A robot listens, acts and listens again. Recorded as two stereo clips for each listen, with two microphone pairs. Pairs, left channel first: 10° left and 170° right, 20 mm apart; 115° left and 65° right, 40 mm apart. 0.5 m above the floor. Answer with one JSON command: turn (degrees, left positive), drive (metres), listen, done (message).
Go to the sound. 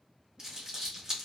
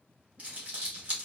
{"turn": -120}
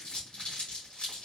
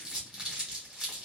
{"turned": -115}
{"drive": 1.0}
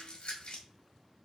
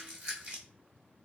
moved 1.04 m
{"turn": -20}
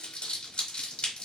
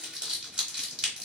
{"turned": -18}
{"drive": 1.0}
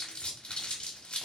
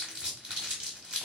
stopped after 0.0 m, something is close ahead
{"done": "I am next to the crumpling."}